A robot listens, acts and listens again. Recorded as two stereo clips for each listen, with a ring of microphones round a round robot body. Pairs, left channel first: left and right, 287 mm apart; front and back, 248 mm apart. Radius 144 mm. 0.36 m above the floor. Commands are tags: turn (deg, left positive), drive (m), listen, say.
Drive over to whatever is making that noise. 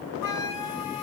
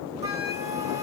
<turn deg="105"/>
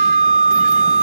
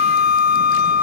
<turn deg="30"/>
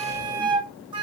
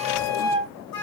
<turn deg="-15"/>
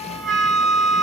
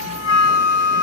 <drive m="1.0"/>
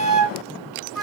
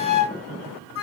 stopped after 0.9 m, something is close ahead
<say>Arrived at the flute, straight ahead.</say>